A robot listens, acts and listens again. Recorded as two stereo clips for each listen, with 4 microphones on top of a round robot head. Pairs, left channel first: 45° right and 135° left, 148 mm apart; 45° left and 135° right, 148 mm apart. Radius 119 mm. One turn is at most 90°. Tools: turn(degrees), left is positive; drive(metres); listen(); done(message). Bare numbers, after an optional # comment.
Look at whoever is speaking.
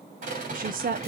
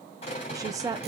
# The woman speaking: 160° left.
turn(90)
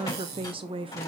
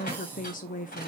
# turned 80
# The woman speaking is now 80° left.
turn(80)
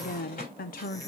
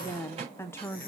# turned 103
# The woman speaking is now 25° right.
turn(-25)
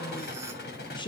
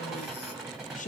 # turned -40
# The woman speaking is now 10° left.
turn(10)
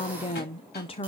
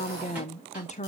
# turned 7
done("Facing the woman speaking, under 1 m away.")